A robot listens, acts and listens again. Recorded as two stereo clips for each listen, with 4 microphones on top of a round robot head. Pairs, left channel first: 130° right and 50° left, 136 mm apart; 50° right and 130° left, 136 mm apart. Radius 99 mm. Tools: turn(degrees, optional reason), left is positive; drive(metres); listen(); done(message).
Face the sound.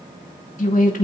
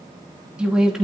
turn(degrees=-145, reason="The woman speaking: 145° right.")
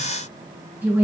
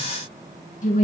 turn(degrees=-25, reason="The woman speaking is now 25° right.")
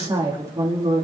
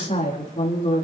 done("Facing the woman speaking, 2 to 4 m away.")